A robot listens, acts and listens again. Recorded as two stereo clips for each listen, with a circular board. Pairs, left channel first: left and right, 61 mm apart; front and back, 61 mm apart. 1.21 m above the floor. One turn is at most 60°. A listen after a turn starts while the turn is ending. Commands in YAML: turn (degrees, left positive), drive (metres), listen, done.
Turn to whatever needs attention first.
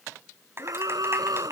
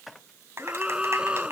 turn: -60
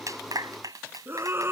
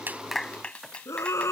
turn: -40
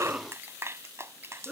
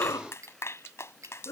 turn: -10
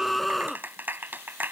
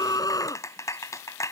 done: "Found it: a scream, straight ahead."